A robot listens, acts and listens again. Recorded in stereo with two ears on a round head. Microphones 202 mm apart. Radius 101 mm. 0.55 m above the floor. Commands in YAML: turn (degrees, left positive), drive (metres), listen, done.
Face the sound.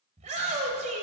turn: -35
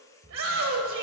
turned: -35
turn: -110
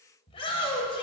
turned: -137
turn: 25
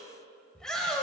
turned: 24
done: "Facing the shout."